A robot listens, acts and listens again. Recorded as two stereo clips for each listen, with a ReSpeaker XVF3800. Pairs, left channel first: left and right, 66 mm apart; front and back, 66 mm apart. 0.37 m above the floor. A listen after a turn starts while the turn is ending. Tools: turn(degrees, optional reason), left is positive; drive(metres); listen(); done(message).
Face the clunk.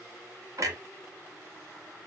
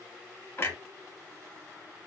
turn(degrees=-50, reason="The clunk: 50° right.")
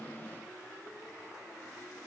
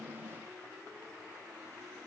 done("Facing where the clunk came from. I can't hear it now.")